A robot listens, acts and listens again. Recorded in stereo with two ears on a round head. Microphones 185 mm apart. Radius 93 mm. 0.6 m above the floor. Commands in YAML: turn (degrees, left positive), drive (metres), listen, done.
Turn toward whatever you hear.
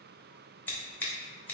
turn: 30
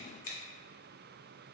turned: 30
turn: 140
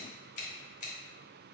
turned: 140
turn: 35
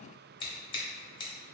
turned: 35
turn: 25
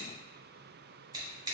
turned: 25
turn: -20
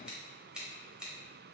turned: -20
done: "Facing the scissors, 1 to 2 m away."